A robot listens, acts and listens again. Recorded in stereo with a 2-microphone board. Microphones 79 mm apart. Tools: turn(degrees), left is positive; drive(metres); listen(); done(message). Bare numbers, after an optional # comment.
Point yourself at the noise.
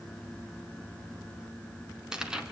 turn(-30)
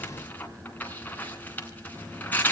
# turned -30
# So it is at 20° left.
turn(20)
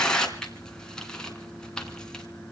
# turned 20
# The tearing paper is now 10° left.
turn(10)
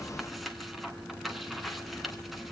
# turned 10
done("Found it: tearing paper, straight ahead.")